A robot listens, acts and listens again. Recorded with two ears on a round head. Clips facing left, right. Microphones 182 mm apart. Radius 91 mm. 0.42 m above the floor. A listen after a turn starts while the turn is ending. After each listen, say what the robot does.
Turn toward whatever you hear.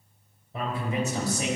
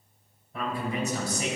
Turn 30° left.
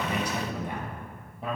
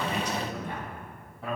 Turn 20° left.
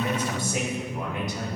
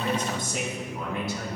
Turn 20° left.
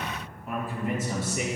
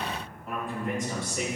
Facing the man speaking, 2 to 4 m away.